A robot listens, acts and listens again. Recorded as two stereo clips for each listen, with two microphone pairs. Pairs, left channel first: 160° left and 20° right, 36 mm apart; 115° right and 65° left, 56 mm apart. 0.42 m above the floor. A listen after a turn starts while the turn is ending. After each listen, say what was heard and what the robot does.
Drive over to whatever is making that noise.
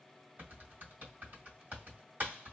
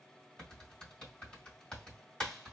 The typing on a keyboard: 45° right. Turn 45° right.
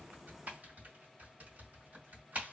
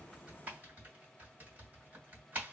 The typing on a keyboard is now 10° left. Turn 10° left.
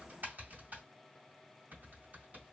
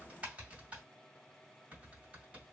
Drive 1.0 m forward.
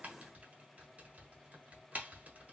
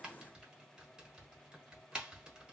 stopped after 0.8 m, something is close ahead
I am next to the typing on a keyboard.